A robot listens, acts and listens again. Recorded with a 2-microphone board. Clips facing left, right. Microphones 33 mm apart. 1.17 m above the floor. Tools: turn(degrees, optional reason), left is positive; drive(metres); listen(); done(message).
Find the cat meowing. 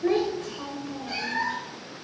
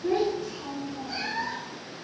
turn(degrees=65, reason="The cat meowing: about 65° left or 115° left.")
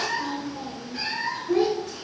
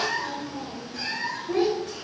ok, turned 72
turn(degrees=25, reason="So it is at 25° left.")
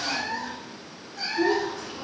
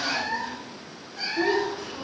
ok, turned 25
turn(degrees=-10, reason="The cat meowing is now 10° right.")
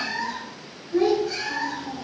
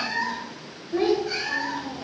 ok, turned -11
turn(degrees=-10, reason="The cat meowing is now 10° right.")
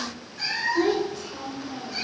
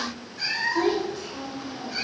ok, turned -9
done("Facing the cat meowing, 2 to 4 m away.")